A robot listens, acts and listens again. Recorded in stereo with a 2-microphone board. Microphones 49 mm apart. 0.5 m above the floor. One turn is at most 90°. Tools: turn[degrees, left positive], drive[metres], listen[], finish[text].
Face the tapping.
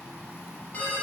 Action: listen[]
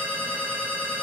Action: listen[]
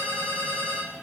Action: finish[I can't make out tapping, only a ringtone.]